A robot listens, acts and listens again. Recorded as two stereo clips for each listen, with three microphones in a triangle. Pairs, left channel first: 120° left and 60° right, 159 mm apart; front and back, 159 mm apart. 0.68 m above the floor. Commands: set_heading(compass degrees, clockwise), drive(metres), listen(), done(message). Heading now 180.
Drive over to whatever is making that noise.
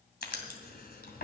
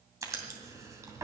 set_heading(70)
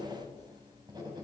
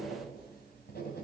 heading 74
drive(1.0)
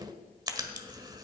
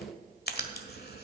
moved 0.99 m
drive(1.0)
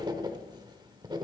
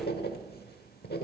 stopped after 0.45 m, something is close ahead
done("I am next to the writing.")